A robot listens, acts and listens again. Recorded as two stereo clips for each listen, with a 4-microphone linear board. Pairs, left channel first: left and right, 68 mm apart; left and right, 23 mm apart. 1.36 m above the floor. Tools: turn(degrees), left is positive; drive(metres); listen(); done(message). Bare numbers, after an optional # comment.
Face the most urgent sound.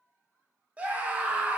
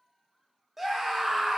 # The scream: about 20° right or 160° right.
turn(-20)
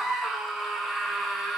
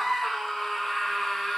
done("Found it: a scream, straight ahead, 1 to 2 m away.")